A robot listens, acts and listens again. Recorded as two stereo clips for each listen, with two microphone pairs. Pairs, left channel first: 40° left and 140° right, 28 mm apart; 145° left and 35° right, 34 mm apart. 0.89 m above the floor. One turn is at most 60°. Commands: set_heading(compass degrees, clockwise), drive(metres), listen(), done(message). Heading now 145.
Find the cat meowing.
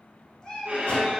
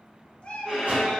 set_heading(85)
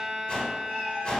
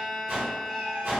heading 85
set_heading(55)
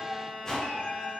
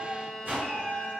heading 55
done("Found it: a cat meowing, straight ahead.")